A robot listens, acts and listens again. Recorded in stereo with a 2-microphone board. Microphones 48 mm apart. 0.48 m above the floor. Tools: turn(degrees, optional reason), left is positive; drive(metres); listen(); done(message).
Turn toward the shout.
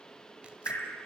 listen()
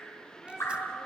turn(degrees=15, reason="The shout: about 15° left or 165° left.")
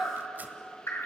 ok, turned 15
done("Found it: a shout, straight ahead, over 4 m away.")